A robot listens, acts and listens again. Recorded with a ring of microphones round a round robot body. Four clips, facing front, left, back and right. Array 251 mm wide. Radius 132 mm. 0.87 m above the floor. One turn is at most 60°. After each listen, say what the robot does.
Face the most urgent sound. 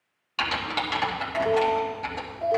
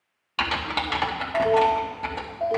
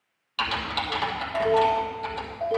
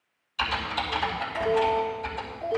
Turn 60° left.
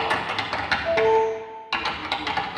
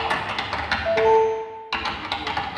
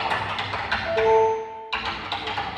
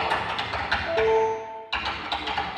Turn 60° left.
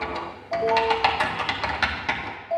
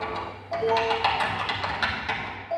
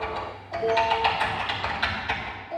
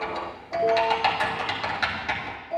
Turn 35° left.
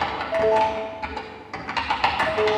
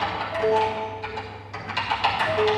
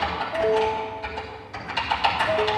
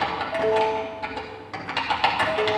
Facing the alarm, 2 to 4 m away.